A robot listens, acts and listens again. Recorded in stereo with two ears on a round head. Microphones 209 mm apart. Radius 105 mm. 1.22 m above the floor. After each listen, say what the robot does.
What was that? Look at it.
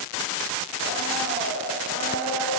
Turn 50° left.
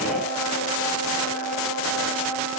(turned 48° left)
Turn 85° left.
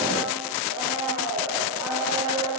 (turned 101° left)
Turn 15° right.
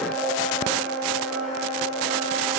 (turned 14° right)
Found it: a blender, straight ahead.